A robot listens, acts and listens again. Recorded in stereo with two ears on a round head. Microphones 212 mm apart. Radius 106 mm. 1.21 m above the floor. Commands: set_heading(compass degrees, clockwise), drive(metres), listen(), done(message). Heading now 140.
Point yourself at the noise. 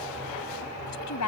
set_heading(50)
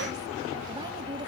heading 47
listen()
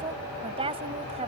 set_heading(72)
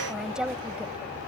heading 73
done("Facing the woman speaking.")